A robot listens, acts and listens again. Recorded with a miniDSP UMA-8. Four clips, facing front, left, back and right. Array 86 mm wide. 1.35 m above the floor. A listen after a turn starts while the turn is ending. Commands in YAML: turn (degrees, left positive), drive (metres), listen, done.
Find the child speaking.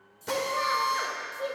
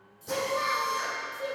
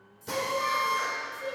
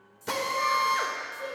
turn: 10
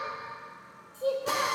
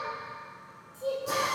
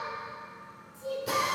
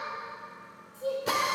done: "Found it: a child speaking, straight ahead, 2 to 4 m away."